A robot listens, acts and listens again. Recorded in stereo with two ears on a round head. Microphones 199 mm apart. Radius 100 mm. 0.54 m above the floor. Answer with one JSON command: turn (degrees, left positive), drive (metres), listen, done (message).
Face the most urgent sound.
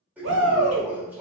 {"turn": -60}
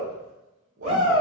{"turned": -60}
{"turn": -30}
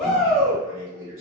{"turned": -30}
{"done": "Found it: a shout, straight ahead."}